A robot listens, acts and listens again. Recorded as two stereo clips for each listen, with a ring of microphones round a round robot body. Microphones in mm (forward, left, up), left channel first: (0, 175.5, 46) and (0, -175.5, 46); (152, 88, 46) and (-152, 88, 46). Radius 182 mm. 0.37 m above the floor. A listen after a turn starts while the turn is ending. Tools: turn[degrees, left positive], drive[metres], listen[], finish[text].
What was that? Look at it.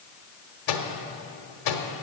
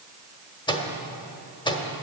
Thought: The microwave: 75° left.
Action: turn[75]
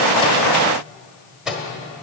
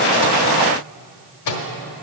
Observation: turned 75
Action: finish[Found it: a microwave, straight ahead, 1 to 2 m away.]